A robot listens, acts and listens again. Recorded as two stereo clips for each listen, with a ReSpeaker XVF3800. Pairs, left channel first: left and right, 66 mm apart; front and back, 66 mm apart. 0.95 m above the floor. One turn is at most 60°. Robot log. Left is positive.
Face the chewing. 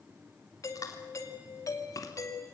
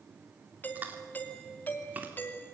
note: The chewing: 115° left.
cmd yaw +60
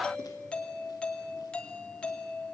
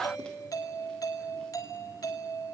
note: Nothing new. It was at 55° left.
cmd yaw +55
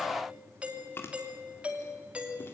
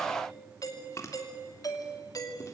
note: The chewing is now 40° left.
cmd yaw +40
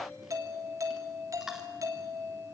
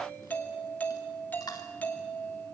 end: Found it: chewing, straight ahead, 2 to 4 m away.